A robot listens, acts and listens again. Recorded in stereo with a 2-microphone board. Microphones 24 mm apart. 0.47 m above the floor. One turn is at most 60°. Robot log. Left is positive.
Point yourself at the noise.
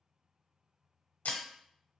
cmd yaw +60
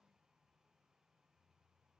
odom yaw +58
note: Nothing new. It was at 30° left.
cmd yaw +30
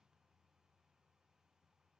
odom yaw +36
end: Facing where the breaking glass came from. I can't hear it now.